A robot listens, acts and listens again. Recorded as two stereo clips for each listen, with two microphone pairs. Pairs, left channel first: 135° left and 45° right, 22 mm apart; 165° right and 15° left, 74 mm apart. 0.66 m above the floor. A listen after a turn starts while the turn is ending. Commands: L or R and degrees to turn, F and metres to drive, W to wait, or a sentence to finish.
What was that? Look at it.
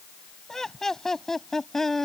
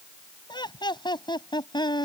R160
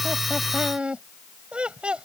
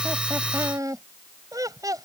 R20
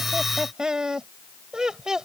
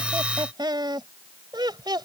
L10
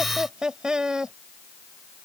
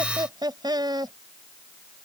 Found it: laughter, straight ahead.